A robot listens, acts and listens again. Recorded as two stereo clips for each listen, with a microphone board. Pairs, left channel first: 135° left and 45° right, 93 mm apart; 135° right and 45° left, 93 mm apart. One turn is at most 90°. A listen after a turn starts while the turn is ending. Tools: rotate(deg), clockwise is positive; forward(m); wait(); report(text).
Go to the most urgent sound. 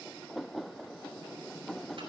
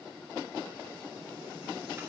wait()
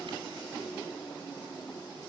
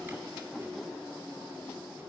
wait()
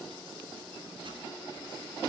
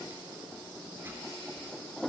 report("I can't make out anything urgent to turn to.")